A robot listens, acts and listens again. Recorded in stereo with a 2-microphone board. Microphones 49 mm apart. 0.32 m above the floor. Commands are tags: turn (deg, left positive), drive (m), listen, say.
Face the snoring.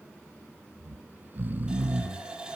<turn deg="-40"/>
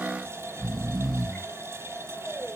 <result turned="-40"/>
<say>Facing the snoring, under 1 m away.</say>